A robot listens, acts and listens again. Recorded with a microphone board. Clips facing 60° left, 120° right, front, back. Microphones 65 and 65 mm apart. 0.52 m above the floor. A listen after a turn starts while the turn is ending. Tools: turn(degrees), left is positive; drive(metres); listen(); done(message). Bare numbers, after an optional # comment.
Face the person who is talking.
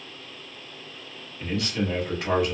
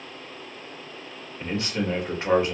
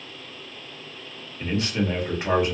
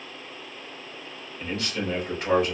# The man speaking: 60° right.
turn(-60)
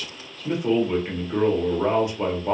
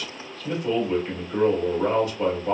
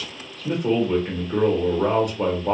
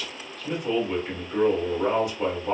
done("Facing the man speaking, 1 to 2 m away.")